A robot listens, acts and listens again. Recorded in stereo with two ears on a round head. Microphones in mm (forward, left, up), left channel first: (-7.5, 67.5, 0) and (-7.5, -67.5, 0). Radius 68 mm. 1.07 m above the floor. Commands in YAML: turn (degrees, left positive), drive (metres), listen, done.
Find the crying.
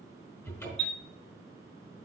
listen: true
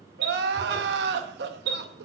turn: -90
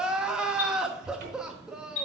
done: "Facing the crying, under 1 m away."